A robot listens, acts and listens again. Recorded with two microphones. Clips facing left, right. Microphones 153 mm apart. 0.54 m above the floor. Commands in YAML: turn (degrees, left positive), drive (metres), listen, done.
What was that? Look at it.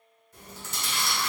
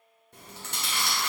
turn: -65
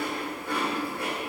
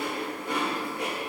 turn: -25
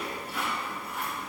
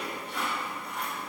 done: "Found it: chewing, straight ahead, 1 to 2 m away."